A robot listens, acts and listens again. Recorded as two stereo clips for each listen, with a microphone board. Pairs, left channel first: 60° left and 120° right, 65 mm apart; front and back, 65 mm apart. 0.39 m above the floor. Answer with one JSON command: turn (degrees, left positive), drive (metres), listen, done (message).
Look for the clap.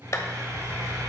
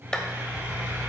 {"turn": 75}
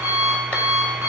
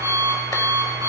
{"listen": true}
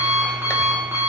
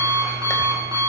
{"listen": true}
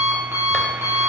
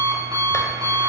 {"done": "I heard a clap from this way, but can't make it out now."}